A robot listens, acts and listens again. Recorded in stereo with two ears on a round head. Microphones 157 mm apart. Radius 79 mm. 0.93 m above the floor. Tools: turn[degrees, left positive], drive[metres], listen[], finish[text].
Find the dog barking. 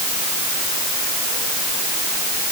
Action: listen[]
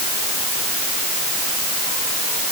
Action: listen[]
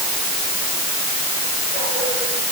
Action: finish[I can't make out a dog barking to turn to.]